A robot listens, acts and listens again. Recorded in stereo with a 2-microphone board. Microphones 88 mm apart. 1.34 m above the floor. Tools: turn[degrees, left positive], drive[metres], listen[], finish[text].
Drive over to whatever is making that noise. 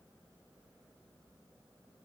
Action: listen[]
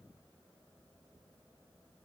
Action: listen[]
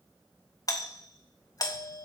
Thought: The doorbell: about 45° left or 135° left.
Action: turn[45]
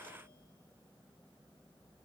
Action: listen[]
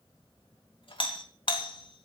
Thought: So it is at 90° left.
Action: turn[90]
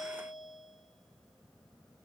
Action: drive[1.0]
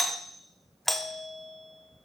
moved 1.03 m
Action: drive[1.0]
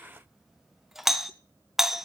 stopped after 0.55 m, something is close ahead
Action: finish[I am next to the doorbell.]